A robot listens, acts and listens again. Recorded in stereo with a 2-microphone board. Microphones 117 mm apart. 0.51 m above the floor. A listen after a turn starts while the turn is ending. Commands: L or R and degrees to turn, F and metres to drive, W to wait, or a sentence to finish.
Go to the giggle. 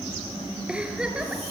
R30
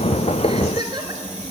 R145
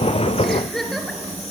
F1.0
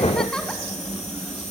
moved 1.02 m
F1.0
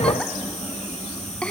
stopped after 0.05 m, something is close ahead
L10
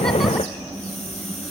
W
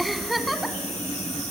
Arrived at the giggle, straight ahead.